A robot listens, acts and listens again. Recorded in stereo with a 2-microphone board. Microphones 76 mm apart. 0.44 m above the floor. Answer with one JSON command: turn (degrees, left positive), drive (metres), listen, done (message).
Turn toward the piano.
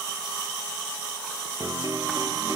{"turn": -55}
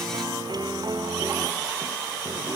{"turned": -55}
{"turn": -70}
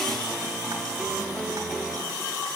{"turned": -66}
{"done": "Found it: a piano, straight ahead, 2 to 4 m away."}